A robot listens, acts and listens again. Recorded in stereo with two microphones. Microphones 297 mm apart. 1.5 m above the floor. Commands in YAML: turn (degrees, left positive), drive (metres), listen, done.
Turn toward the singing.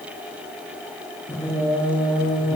turn: 15
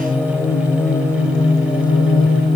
turn: 15
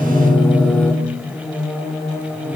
turn: 30
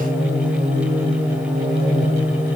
turn: -25
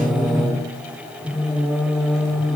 done: "Facing the singing, over 4 m away."